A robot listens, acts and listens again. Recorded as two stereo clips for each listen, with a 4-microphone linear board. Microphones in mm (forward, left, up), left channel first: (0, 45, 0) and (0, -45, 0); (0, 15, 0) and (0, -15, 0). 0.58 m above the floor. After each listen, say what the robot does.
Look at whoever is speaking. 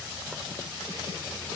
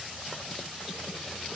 Keep listening.
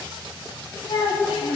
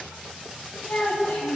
Turn 70° left.
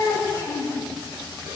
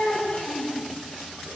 Turn 40° left.
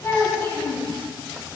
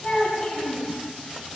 Turn 25° left.
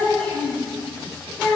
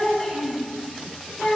Turn 15° left.
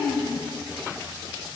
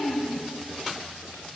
Facing the child speaking.